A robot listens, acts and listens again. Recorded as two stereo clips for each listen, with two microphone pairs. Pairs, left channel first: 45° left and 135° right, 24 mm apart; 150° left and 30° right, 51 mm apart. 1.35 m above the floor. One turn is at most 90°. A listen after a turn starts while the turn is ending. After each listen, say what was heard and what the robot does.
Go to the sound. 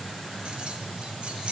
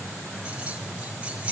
The keys jangling: 95° right. Turn 90° right.
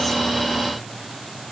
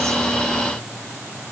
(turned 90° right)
Keep listening.
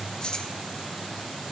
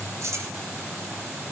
The keys jangling is now 10° right. Turn 10° right.
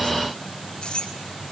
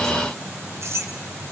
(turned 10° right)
Drive 1.0 m forward.
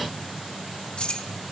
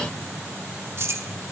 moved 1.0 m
Drive 1.0 m forward.
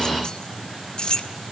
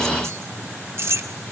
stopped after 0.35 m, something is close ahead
Arrived at the keys jangling, straight ahead.